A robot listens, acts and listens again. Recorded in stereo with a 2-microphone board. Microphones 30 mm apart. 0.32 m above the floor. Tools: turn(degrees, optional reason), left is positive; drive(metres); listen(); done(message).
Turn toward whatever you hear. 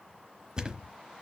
turn(degrees=-25, reason="The thud: about 25° right or 155° right.")
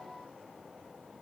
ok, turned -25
listen()
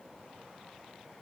done("I heard a thud, but can't make it out now. It was about straight ahead or 130° right.")